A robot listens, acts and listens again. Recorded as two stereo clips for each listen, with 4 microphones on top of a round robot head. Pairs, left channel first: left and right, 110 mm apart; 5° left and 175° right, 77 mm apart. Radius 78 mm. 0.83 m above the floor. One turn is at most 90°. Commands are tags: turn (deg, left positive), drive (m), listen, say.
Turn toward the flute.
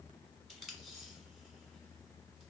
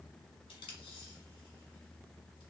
<listen/>
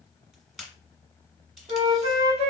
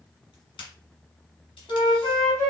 <turn deg="-70"/>
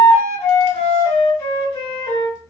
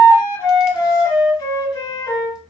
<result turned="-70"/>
<turn deg="35"/>
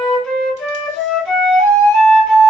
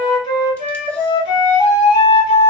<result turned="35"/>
<say>Found it: a flute, straight ahead, 1 to 2 m away.</say>